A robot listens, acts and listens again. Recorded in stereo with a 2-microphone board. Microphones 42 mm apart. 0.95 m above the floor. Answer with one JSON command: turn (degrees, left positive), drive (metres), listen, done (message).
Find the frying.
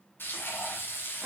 {"turn": 60}
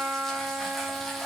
{"done": "Facing the frying, 2 to 4 m away."}